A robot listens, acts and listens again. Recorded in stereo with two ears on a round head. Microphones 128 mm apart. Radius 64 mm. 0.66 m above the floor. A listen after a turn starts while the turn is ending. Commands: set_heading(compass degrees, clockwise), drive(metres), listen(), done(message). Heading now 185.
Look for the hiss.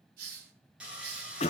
set_heading(255)
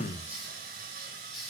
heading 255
done("Facing the hiss.")